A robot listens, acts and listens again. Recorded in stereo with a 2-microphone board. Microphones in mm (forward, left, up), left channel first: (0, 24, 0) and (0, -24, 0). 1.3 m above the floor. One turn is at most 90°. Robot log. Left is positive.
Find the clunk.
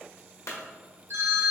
cmd yaw +90
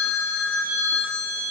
end: Facing where the clunk came from. I can't hear it now.